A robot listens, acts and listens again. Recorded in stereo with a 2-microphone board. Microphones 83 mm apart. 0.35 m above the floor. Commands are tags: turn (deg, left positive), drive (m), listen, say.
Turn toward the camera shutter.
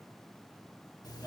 <listen/>
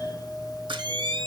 <turn deg="-65"/>
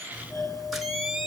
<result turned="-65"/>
<say>Found it: a camera shutter, straight ahead.</say>